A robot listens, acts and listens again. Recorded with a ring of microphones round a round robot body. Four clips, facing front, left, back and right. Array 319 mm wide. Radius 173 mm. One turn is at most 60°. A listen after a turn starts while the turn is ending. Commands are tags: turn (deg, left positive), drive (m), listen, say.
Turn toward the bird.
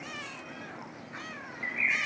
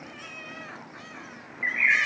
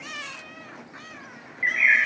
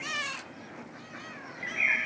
<turn deg="60"/>
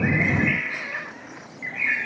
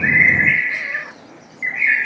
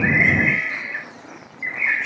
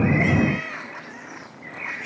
<turn deg="60"/>
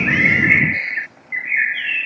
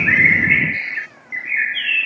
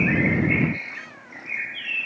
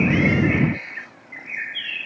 <turn deg="35"/>
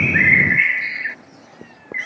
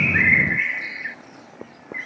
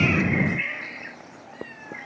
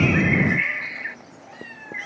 <say>Facing the bird.</say>